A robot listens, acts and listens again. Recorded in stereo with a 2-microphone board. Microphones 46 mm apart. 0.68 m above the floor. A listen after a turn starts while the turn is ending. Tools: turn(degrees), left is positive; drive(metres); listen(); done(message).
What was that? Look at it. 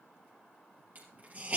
turn(degrees=-40)
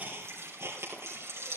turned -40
turn(degrees=-100)
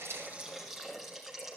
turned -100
done("Facing the hiss, over 4 m away.")